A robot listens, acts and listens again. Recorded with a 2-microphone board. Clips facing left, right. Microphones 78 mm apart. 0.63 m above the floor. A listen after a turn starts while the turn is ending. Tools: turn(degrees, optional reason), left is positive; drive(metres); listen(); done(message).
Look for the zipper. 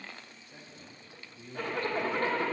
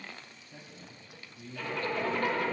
turn(degrees=45, reason="The zipper: about 45° left or 135° left.")
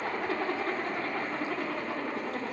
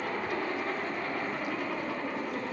turn(degrees=75, reason="So it is at 75° left.")
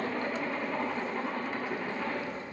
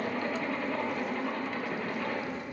turn(degrees=15, reason="The zipper is now 15° left.")
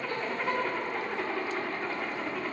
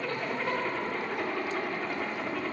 done("Facing the zipper, 1 to 2 m away.")